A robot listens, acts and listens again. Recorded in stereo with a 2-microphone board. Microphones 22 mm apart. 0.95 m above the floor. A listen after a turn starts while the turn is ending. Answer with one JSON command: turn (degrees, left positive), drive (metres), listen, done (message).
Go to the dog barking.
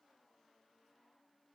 {"listen": true}
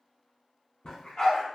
{"turn": 40}
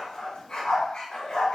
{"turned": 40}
{"turn": 100}
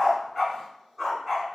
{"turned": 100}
{"drive": 1.0}
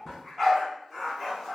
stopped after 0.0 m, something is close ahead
{"done": "Something is in my way. I am facing the dog barking but have not reached it."}